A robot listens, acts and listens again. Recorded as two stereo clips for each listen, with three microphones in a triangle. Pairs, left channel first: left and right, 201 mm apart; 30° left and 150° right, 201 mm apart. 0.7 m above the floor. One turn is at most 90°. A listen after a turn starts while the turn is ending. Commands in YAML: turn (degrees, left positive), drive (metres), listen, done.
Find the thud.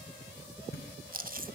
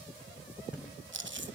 turn: 90
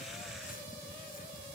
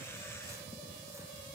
turn: 35
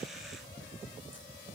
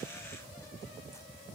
done: "I heard a thud from this way, but can't make it out now."